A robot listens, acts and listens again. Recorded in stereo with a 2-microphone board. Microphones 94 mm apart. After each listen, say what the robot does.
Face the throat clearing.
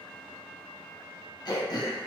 Turn 45° left.
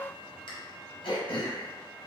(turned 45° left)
Turn 80° left.
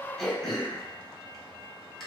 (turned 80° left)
Facing the throat clearing, under 1 m away.